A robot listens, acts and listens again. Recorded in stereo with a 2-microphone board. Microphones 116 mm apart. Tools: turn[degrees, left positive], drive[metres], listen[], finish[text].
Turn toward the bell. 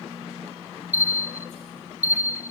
Action: turn[-90]
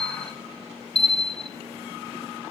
Action: finish[Found it: a bell, straight ahead, 1 to 2 m away.]